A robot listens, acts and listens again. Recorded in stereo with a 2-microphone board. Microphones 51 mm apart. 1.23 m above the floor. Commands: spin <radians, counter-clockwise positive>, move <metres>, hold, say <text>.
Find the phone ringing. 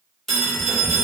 spin 0.52
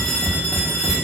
spin 2.44
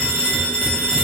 spin 0.61
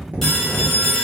say Found it: a phone ringing, straight ahead, 1 to 2 m away.